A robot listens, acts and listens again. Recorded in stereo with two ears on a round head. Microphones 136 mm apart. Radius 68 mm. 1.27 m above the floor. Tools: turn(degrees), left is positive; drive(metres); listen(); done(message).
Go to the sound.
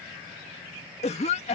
turn(degrees=45)
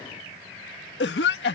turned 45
turn(degrees=90)
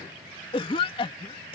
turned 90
turn(degrees=35)
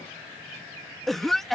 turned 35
drive(metres=1.0)
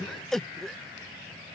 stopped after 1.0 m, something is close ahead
done("I am next to the cough.")